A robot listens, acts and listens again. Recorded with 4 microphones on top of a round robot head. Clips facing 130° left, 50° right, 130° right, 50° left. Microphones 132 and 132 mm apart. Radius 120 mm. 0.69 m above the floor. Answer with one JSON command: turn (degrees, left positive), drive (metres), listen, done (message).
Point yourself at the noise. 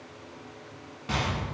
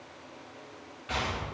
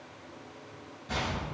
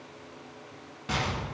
{"turn": 75}
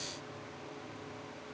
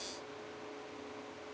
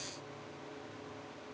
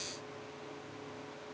{"done": "Facing where the explosion came from. I can't hear it now."}